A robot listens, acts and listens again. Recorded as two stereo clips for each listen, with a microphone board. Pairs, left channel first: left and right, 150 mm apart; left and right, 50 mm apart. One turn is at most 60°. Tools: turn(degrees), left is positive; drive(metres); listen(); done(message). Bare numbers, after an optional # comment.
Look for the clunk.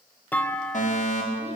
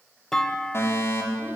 turn(30)
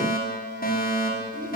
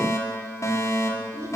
listen()
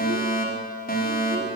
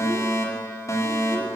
done("I heard a clunk, but can't make it out now. It was about 20° right or 140° left.")